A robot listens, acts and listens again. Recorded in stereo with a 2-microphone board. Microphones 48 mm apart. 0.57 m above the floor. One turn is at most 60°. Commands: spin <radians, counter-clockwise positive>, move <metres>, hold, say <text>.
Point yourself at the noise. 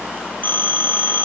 spin 0.70
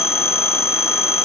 spin 1.05
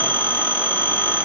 spin 0.79
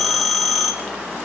say Facing the phone ringing.